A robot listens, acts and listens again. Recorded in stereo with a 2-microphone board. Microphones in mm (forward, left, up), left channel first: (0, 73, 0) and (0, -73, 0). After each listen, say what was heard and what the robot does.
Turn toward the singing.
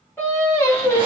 The singing: about 20° left or 160° left. Turn 20° left.
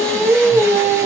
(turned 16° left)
The singing: about 20° left or 160° left. Turn 20° left.
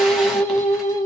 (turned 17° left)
The singing: about 25° left or 155° left. Turn 25° left.
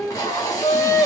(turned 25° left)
The singing: about 20° left or 160° left. Turn 20° left.
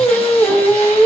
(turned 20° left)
The singing: about 20° left or 160° left. Turn 20° left.
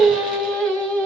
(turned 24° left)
Turn 30° left.
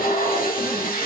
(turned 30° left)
Keep listening.
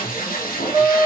So it is at 20° right. Turn 20° right.
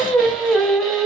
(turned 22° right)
Facing the singing, 1 to 2 m away.